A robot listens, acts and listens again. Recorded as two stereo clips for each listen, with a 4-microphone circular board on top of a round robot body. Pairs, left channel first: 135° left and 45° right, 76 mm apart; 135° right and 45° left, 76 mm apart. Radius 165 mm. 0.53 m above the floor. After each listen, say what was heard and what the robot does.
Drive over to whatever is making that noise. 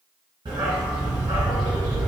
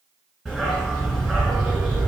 The dog barking: 45° right. Turn 45° right.
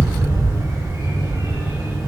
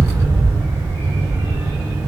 Drive 1.0 m forward.
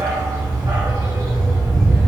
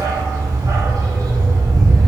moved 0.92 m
Drive 1.0 m forward.
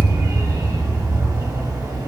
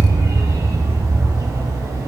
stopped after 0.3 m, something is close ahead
Arrived at the dog barking, straight ahead.